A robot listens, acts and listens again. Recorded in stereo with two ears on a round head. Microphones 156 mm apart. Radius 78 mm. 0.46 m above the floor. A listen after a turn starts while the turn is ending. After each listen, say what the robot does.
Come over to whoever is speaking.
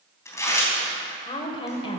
Turn 30° left.
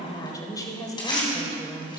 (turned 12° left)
Turn 20° left.
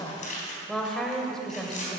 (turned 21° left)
Drive 1.0 m forward.
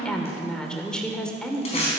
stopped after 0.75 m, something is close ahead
Turn 10° left.
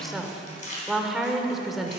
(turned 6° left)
I am next to the woman speaking.